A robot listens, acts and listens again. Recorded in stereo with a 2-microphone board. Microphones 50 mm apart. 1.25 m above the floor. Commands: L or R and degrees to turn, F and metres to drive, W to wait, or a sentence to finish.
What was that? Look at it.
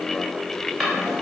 L30
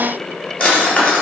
L150
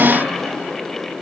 W
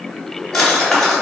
Facing the drawer.